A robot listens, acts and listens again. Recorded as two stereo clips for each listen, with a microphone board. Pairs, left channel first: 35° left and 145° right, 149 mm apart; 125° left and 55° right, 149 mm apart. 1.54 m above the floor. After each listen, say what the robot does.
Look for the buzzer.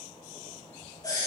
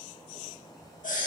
Keep listening.
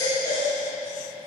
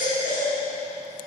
Keep listening.
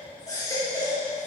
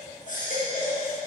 I can't make out a buzzer, only a baby crying.